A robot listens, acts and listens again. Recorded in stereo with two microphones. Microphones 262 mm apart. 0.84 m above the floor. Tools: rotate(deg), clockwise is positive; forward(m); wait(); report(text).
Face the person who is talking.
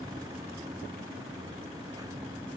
wait()
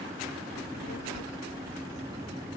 rotate(-90)
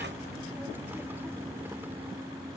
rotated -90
wait()
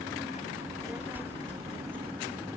report("Facing the child speaking.")